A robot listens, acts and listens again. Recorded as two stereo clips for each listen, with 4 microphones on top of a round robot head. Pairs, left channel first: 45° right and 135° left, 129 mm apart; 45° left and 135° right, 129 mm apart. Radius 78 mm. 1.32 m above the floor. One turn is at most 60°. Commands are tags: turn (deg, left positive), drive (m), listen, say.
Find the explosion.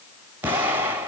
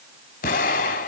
<turn deg="60"/>
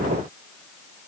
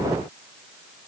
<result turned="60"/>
<say>Facing where the explosion came from. I can't hear it now.</say>